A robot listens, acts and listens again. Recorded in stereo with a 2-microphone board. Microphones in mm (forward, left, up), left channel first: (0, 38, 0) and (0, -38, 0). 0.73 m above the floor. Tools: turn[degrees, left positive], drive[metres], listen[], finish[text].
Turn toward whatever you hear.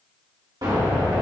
Thought: The explosion: about 65° right or 115° right.
Action: turn[-65]
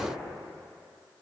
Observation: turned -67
Action: listen[]
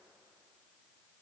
Action: finish[I heard an explosion, but can't make it out now. It was about 5° left or 50° right.]